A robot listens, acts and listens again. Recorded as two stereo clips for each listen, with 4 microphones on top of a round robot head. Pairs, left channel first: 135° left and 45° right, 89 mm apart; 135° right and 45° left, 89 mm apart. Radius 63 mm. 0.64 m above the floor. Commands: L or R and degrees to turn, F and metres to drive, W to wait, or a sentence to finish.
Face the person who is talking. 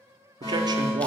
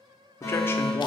R75
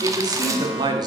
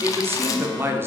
R15
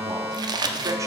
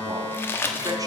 W
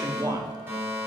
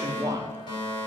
Found it: a man speaking, straight ahead.